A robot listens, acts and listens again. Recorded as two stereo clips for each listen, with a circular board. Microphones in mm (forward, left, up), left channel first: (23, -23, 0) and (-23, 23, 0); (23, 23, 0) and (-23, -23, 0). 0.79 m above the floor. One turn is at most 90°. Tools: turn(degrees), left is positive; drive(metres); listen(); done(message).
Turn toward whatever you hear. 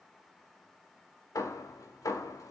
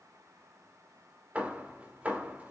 turn(degrees=-65)
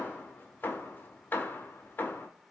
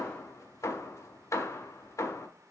turn(degrees=10)
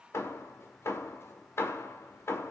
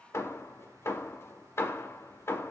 done("Found it: hammering, straight ahead, 1 to 2 m away.")